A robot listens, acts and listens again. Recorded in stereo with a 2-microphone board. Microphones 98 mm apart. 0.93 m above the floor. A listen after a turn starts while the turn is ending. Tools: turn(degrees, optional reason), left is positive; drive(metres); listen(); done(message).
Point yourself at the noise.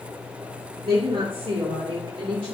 turn(degrees=-65, reason="The woman speaking: about 65° right or 115° right.")
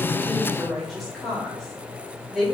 done("Found it: a woman speaking, straight ahead, over 4 m away.")